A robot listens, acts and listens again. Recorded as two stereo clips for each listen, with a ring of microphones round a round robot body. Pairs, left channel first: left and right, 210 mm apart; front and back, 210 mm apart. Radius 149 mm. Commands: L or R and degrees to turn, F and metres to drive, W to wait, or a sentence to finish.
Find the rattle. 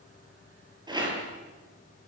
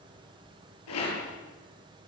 R20
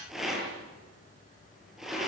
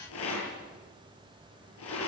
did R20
Facing the rattle, over 4 m away.